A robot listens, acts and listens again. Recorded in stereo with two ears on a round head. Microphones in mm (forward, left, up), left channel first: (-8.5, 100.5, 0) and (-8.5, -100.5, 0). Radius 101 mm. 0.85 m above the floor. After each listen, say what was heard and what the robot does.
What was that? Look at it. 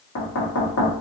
The knocking: about 65° left or 115° left. Turn 65° left.
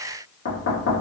So it is at 50° left. Turn 50° left.
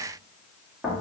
Facing the knocking.